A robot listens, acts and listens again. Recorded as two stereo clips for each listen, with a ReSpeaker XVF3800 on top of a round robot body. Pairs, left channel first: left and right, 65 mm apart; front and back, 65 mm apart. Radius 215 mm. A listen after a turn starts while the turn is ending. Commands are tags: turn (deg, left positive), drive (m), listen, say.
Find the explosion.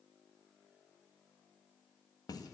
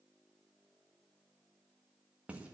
<listen/>
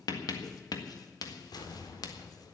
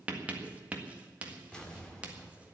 <turn deg="75"/>
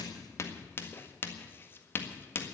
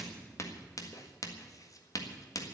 <say>I heard an explosion from this way, but can't make it out now.</say>